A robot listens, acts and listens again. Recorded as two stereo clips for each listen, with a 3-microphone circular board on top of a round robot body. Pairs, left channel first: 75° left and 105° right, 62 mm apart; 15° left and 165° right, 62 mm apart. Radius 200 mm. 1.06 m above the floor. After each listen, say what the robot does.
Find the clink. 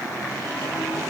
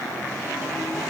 Keep listening.
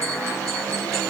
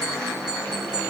Keep listening.
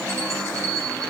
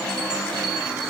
I can't make out a clink to turn to.